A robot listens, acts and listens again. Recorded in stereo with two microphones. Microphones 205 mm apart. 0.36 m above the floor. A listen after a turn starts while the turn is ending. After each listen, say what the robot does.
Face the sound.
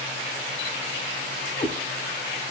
Turn 35° left.
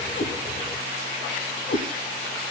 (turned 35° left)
Turn 105° left.
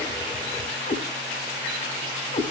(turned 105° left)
Turn 45° left.
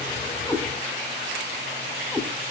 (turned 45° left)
Turn 10° left.
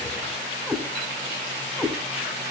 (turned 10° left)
Facing the cat meowing, 1 to 2 m away.